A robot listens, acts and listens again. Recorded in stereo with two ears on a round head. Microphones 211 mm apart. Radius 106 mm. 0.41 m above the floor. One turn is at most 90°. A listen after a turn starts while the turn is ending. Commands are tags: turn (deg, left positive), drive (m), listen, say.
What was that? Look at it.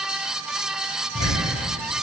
<turn deg="55"/>
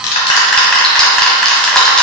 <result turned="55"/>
<say>Facing the ticking.</say>